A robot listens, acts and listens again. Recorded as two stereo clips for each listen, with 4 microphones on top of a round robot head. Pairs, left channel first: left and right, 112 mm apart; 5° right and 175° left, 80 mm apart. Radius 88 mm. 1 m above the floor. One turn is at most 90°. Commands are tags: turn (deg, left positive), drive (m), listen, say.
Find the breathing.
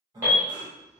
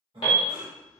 <turn deg="-90"/>
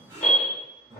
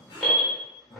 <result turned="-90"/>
<turn deg="-40"/>
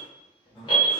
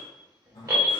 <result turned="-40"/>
<turn deg="15"/>
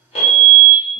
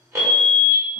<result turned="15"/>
<listen/>
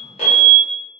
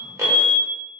<listen/>
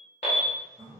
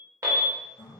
<say>Facing the breathing.</say>